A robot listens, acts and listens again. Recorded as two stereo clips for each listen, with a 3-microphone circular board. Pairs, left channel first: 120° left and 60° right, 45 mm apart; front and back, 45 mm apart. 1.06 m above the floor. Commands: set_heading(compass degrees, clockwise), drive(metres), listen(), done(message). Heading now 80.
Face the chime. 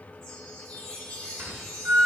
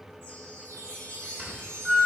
set_heading(245)
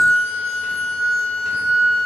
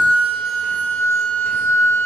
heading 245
listen()
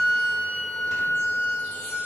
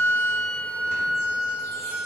listen()
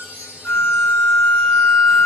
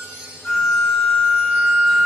set_heading(255)
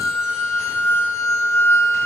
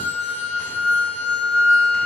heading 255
listen()
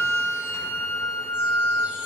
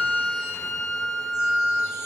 listen()
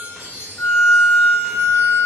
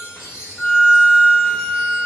done("Found it: a chime, straight ahead, 2 to 4 m away.")